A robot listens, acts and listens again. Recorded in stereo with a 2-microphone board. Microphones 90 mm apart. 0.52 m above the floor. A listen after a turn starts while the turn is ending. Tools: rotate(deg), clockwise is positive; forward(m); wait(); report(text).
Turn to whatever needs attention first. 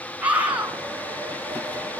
rotate(15)
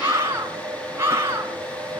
rotate(150)
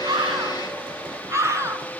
rotate(35)
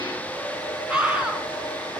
rotate(10)
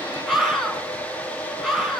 report("Facing the scream.")